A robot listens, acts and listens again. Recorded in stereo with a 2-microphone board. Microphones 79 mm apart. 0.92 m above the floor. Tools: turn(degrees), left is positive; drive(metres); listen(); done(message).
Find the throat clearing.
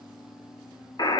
listen()
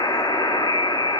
listen()
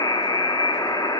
done("I can't make out throat clearing to turn to.")